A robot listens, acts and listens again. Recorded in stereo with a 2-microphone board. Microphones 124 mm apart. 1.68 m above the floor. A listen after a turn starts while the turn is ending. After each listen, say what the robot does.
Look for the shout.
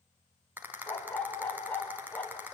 Keep listening.
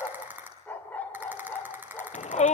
Turn 65° left.
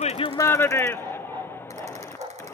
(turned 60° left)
Turn 20° left.
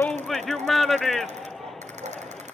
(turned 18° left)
Found it: a shout, straight ahead, 1 to 2 m away.